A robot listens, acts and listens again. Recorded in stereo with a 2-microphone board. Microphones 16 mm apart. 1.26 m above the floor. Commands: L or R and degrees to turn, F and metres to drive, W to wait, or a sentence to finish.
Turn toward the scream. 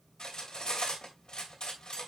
W
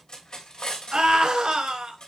R90
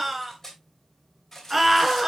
Found it: a scream, straight ahead.